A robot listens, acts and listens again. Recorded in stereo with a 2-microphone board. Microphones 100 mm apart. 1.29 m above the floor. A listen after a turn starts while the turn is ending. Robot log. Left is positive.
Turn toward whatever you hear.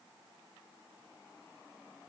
cmd idle
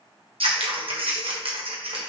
cmd yaw -90
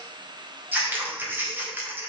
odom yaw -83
note: So it is at 20° right.
cmd yaw -20
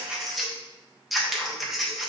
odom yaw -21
end: Facing the scissors.